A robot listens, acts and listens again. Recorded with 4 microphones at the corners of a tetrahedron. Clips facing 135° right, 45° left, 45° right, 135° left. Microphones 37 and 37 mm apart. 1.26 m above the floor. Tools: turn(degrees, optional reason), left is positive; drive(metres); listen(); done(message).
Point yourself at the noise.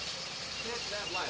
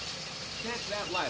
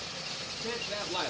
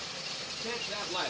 turn(degrees=40, reason="The man speaking: 40° left.")
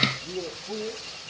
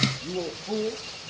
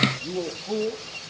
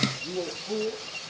done("Facing the man speaking.")